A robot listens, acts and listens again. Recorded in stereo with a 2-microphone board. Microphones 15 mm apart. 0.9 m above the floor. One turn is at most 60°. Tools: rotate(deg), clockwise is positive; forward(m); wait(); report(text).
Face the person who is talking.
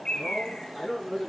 rotate(-30)
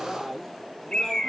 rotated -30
rotate(-60)
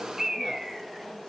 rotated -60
rotate(-60)
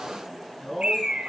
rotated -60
rotate(-20)
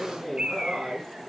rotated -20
rotate(10)
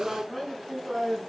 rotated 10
report("Found it: a man speaking, straight ahead.")